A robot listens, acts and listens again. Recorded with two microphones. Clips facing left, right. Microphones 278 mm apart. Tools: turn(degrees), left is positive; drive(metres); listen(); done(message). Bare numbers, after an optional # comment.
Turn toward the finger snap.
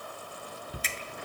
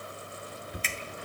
# The finger snap: about 45° left or 135° left.
turn(45)
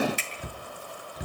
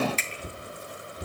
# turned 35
# So it is at 10° left.
turn(10)
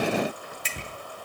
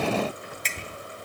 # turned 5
# The finger snap is now 10° left.
turn(10)
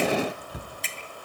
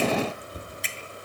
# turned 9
done("Facing the finger snap, 2 to 4 m away.")